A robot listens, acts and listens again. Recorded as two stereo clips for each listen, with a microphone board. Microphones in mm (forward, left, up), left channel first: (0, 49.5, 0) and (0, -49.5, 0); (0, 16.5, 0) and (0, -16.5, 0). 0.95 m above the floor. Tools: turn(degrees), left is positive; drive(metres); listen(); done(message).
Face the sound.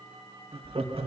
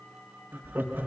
turn(degrees=-90)
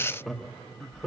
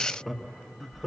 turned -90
done("Found it: laughter, straight ahead, 1 to 2 m away.")